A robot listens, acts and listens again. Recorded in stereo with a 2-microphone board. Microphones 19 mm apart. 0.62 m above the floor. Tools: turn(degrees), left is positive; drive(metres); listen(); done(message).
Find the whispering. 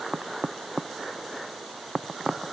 listen()
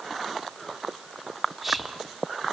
turn(degrees=-20)
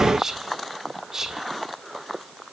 turn(degrees=-140)
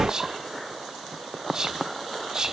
turn(degrees=-25)
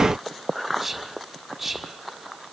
done("Facing the whispering.")